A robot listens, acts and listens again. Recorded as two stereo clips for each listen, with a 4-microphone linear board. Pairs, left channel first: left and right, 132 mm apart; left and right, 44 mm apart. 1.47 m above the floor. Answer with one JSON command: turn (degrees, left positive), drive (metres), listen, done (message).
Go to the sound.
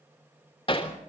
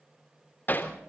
{"turn": 45}
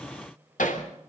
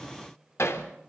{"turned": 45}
{"turn": 90}
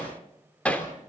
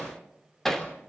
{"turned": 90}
{"turn": 10}
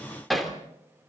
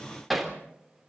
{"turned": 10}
{"drive": 1.0}
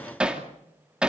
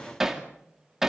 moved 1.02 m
{"drive": 1.0}
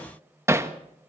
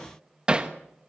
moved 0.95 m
{"turn": -20}
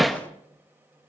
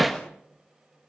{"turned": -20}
{"drive": 1.0}
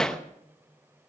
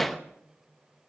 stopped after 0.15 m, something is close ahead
{"done": "Arrived at the hammering, straight ahead."}